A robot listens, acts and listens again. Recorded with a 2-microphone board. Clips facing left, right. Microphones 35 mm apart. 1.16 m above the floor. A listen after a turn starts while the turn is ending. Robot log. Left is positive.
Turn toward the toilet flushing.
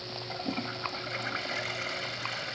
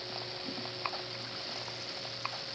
note: The toilet flushing: about 65° left or 115° left.
cmd yaw +65
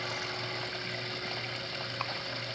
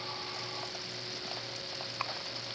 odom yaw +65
cmd idle
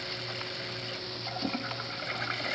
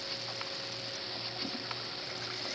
note: So it is at 50° left.
cmd yaw +50
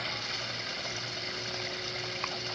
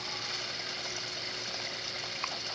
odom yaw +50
note: The toilet flushing is now 10° left.
cmd yaw +10
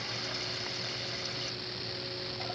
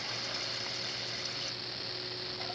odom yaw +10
cmd idle
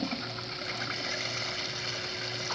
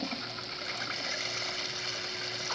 end: Found it: a toilet flushing, straight ahead.